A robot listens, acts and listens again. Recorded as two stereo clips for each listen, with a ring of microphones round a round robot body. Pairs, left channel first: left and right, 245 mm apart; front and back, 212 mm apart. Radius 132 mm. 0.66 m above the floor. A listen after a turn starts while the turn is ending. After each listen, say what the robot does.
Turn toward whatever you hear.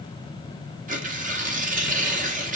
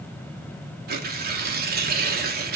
Turn 145° right.
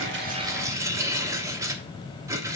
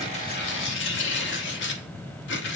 Turn 15° right.
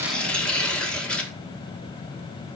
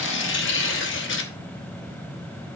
Found it: tearing paper, straight ahead, 1 to 2 m away.